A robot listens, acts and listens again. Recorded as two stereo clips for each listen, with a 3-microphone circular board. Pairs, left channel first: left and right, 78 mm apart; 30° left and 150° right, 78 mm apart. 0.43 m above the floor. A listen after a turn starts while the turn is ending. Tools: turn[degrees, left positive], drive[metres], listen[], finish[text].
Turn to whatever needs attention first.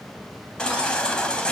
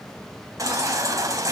Thought: The baby crying: 170° left.
Action: turn[170]
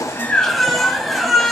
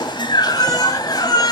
Action: finish[Found it: a baby crying, straight ahead.]